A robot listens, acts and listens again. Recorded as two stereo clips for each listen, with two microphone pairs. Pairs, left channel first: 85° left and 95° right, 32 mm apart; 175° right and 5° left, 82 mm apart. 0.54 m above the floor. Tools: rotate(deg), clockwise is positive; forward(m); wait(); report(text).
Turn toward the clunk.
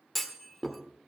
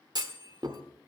report("Found it: a clunk, straight ahead.")